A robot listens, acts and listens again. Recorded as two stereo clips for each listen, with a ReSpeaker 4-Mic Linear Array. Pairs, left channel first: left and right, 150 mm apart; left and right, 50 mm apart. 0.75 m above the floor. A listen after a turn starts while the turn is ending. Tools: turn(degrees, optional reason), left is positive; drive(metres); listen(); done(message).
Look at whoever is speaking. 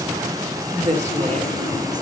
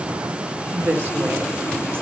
turn(degrees=-45, reason="The woman speaking: about 45° right or 135° right.")
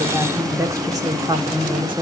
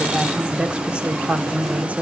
turn(degrees=-35, reason="So it is at 35° right.")
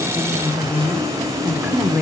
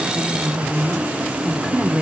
turn(degrees=-10, reason="The woman speaking is now 10° right.")
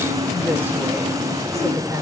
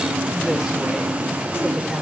turn(degrees=-20, reason="The woman speaking is now 20° right.")
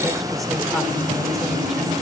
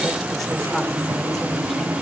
listen()
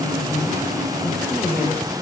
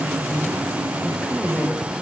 done("Found it: a woman speaking, straight ahead, 2 to 4 m away.")